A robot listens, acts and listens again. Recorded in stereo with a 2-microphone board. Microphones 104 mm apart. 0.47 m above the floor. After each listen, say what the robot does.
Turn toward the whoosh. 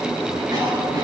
Keep listening.
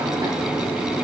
Keep listening.
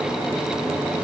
I can't make out a whoosh to turn to.